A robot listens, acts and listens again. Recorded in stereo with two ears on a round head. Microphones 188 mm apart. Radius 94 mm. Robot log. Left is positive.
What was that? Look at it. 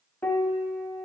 cmd yaw +30
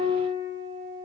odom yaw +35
note: So it is at 25° right.
cmd yaw -25
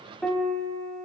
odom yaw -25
end: Facing the piano.